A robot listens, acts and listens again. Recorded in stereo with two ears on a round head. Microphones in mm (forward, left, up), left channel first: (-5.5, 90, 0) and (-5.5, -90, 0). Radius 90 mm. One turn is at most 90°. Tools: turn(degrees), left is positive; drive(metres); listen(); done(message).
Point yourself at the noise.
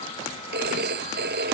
turn(degrees=-55)
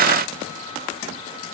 listen()
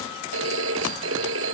turn(degrees=-70)
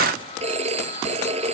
turn(degrees=-30)
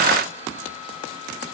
listen()
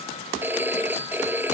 turn(degrees=-10)
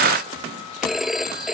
done("Found it: a phone ringing, straight ahead.")